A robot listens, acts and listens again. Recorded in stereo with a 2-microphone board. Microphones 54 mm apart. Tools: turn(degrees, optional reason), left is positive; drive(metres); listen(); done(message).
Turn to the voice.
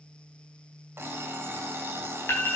listen()
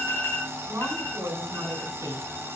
turn(degrees=-60, reason="The woman speaking: about 60° right or 120° right.")
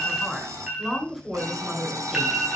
done("Found it: a woman speaking, straight ahead.")